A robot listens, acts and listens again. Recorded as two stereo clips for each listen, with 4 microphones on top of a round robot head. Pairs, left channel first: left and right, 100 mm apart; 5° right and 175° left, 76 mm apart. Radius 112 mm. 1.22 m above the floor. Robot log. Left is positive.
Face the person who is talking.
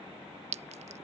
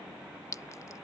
cmd idle
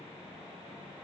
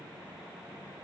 cmd idle
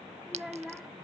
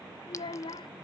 end: Found it: a child speaking, straight ahead.